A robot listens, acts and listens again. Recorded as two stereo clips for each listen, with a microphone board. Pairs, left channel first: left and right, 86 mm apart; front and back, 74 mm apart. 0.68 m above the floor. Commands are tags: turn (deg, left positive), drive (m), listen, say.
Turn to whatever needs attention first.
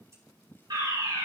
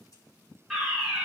<turn deg="-95"/>
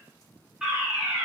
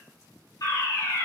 <turn deg="-10"/>
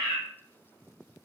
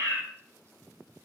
<say>Found it: a fire alarm, straight ahead.</say>